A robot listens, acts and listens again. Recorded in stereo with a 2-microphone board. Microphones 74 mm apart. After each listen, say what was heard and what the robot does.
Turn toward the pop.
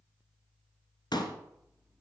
The pop: about 70° left or 110° left. Turn 70° left.
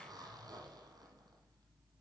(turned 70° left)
Keep listening.
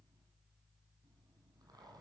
I heard a pop, but can't make it out now. It was about straight ahead or 40° left.